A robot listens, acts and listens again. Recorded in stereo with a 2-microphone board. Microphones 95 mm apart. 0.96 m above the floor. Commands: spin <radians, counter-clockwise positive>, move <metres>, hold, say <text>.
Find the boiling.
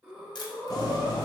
spin 0.79
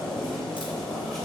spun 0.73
say Facing the boiling.